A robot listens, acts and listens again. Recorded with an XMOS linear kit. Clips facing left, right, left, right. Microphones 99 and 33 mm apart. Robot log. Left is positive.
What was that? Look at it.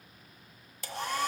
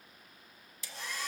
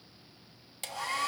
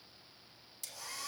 note: The hair dryer: about 60° left or 120° left.
cmd yaw +60
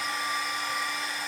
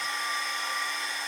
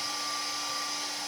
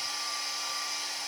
end: Found it: a hair dryer, straight ahead, 1 to 2 m away.